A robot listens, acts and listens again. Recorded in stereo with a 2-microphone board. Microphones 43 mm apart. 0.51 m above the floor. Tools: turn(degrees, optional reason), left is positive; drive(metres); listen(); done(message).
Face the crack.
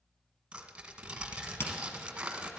turn(degrees=60, reason="The crack: about 60° left or 120° left.")
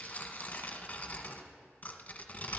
listen()
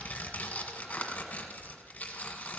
done("I heard a crack, but can't make it out now. It was about straight ahead or 60° left.")